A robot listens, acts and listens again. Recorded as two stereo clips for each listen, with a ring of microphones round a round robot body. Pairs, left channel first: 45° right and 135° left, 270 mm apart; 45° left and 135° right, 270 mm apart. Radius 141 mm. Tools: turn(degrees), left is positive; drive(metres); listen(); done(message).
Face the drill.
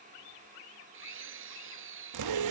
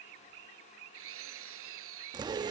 turn(degrees=180)
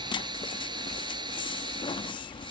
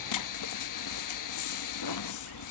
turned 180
turn(degrees=60)
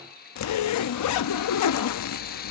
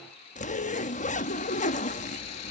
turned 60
turn(degrees=15)
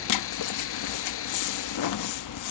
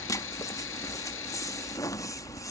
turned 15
done("Facing the drill.")